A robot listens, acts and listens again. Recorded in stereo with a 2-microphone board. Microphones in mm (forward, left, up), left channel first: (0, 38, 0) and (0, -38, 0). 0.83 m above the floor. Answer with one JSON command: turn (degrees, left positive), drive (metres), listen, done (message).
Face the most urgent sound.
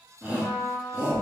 {"turn": -20}
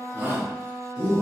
{"turn": -140}
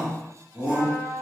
{"turn": -20}
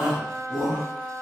{"done": "Facing the shout, 1 to 2 m away."}